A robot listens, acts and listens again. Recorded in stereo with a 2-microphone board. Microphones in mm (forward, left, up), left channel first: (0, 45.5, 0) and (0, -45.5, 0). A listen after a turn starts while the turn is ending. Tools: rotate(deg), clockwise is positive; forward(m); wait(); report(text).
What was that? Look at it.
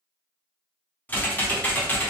rotate(-20)
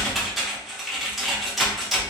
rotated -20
report("Found it: typing on a keyboard, straight ahead.")